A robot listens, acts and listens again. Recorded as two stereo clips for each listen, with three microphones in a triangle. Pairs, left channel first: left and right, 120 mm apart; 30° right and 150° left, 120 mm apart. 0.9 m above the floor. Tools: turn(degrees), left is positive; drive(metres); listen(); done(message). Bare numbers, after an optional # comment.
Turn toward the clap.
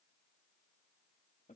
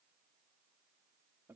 listen()
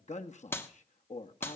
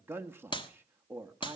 # The clap: 15° left.
turn(15)
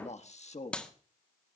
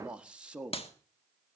done("Found it: a clap, straight ahead, 1 to 2 m away.")